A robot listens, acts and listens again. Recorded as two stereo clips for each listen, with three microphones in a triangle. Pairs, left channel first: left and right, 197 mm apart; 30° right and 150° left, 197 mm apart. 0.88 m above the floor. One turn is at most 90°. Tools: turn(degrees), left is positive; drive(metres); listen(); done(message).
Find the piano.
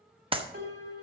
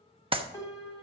turn(degrees=-90)
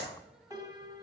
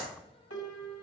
turn(degrees=-15)
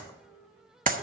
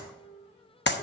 done("Facing the piano, 2 to 4 m away.")